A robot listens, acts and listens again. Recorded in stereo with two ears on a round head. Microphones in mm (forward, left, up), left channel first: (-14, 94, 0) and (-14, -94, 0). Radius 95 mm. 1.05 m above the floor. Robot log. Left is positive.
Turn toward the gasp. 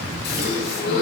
note: The gasp: about 50° left or 130° left.
cmd yaw +50
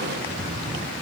cmd idle
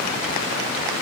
end: I heard a gasp, but can't make it out now. It was about straight ahead or 80° left.